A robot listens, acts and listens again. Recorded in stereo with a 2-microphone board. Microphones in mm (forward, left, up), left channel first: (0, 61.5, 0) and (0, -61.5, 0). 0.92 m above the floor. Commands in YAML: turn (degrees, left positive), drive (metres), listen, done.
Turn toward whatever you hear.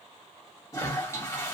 turn: 25
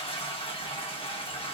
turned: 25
turn: 130
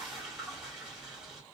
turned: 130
done: "Facing the toilet flushing, 1 to 2 m away."